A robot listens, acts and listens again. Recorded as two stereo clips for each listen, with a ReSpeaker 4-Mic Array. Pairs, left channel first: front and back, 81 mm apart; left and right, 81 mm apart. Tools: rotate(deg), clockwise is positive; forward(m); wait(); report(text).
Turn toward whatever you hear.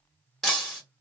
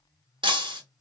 rotate(90)
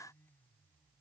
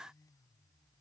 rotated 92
report("Facing where the breaking glass came from. I can't hear it now.")